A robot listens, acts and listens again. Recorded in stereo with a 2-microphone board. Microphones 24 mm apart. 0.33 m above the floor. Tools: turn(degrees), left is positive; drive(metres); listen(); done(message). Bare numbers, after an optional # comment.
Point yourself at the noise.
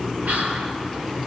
turn(-90)
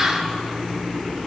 listen()
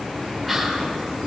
done("Facing the whispering.")